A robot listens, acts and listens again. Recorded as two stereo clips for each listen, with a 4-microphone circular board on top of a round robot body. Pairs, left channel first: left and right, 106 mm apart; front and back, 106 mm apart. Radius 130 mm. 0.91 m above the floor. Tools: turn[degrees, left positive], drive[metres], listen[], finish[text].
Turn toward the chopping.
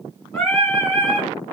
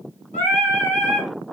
Action: listen[]
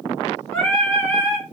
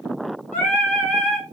Action: listen[]
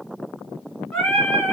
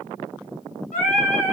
Action: finish[I can't make out chopping, only singing.]